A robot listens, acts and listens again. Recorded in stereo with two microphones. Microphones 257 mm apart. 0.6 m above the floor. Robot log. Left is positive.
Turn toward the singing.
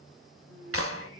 note: The singing: about 60° right or 120° right.
cmd yaw -60
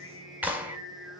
note: So it is at 50° right.
cmd yaw -50
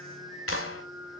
note: The singing is now 25° left.
cmd yaw +25
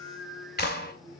end: Found it: singing, straight ahead, over 4 m away.